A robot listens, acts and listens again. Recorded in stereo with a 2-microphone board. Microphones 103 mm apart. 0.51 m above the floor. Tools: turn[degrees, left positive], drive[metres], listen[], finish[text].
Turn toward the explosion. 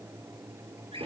Action: listen[]
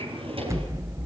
Thought: The explosion: about 30° right or 150° right.
Action: turn[-30]
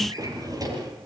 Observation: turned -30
Action: listen[]
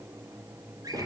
Action: finish[I heard an explosion, but can't make it out now. It was about straight ahead or 120° right.]